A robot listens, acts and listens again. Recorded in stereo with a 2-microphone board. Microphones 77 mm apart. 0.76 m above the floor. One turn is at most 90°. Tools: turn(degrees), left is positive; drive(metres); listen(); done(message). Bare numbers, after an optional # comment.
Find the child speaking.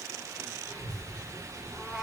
# The child speaking: about 75° right or 105° right.
turn(-75)
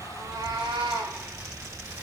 # So it is at 30° right.
turn(-30)
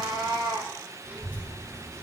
# The child speaking is now 35° right.
turn(-35)
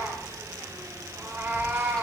# The child speaking is now 15° left.
turn(15)
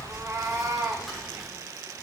done("Facing the child speaking, 2 to 4 m away.")